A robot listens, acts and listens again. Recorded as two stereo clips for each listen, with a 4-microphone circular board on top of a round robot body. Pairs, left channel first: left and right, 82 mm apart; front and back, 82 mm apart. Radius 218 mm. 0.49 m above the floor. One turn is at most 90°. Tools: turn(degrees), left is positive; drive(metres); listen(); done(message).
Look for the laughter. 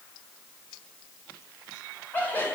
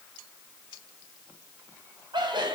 turn(degrees=90)
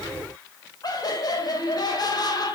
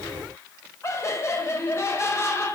turn(degrees=55)
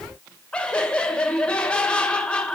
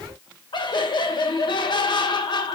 turn(degrees=10)
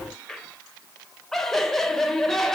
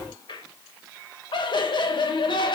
done("Found it: laughter, straight ahead.")